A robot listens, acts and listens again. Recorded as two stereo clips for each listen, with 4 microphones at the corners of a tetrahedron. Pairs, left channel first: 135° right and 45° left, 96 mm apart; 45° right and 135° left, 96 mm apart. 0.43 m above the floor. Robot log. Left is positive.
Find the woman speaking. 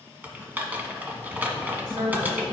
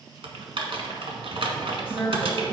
note: The woman speaking: 60° left.
cmd yaw +60
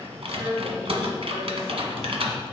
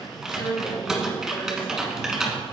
note: The woman speaking is now 10° right.
cmd yaw -10
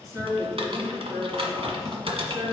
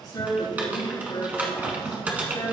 end: Facing the woman speaking, over 4 m away.